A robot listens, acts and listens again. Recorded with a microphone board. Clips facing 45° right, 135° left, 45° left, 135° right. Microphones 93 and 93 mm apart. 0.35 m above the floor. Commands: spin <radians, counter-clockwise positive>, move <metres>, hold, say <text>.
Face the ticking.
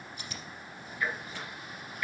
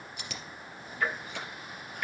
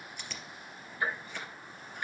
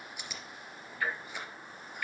spin 1.92
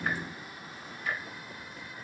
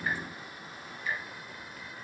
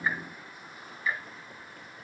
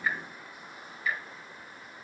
spin -0.26
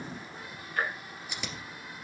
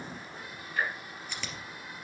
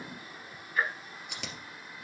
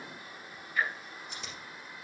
say Facing the ticking.